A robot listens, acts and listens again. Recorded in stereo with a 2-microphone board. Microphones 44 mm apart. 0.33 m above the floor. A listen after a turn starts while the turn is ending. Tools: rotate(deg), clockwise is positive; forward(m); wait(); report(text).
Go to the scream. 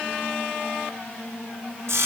wait()
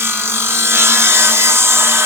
wait()
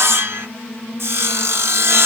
report("I can't make out a scream, only sawing.")